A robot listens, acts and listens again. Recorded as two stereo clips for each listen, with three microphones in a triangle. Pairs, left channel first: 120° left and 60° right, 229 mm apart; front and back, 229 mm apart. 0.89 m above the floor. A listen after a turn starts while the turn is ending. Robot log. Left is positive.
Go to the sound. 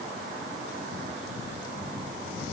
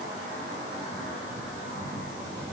cmd idle
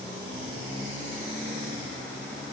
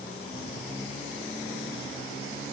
cmd idle
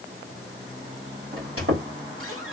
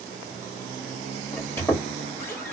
note: The squeak: 80° right.
cmd yaw -80
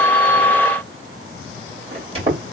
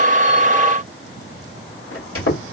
cmd fwd 1.0
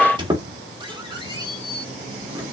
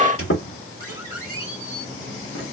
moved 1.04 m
note: The squeak is now 10° left.
cmd yaw +10
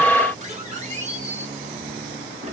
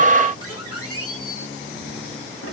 cmd fwd 1.0
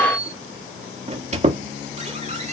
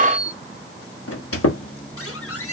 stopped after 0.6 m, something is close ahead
end: Arrived at the squeak, straight ahead.